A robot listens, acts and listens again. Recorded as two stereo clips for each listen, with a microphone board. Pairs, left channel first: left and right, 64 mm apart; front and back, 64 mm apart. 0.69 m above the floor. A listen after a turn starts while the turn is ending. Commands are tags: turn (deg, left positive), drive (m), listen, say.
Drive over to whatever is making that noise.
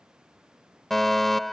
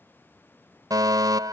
<turn deg="175"/>
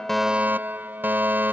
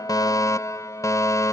<turn deg="-30"/>
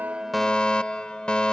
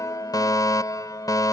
<turn deg="15"/>
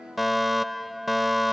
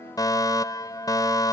<drive m="1.0"/>
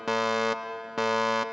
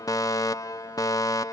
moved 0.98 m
<drive m="1.0"/>
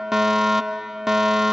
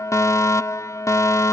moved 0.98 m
<turn deg="-10"/>
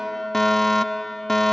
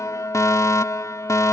<drive m="1.0"/>
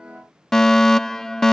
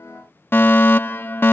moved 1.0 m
<turn deg="10"/>
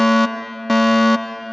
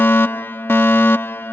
<drive m="1.0"/>
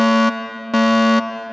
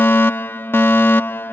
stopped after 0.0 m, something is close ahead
<say>I am next to the fire alarm.</say>